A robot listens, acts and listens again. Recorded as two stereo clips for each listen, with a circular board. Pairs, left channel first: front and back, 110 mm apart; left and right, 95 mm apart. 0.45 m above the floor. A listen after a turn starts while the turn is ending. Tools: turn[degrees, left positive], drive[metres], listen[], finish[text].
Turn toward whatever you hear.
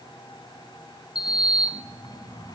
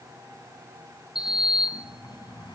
Thought: The sliding door: 50° left.
Action: turn[50]
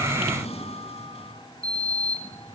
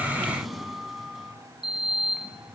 Action: finish[Facing the sliding door.]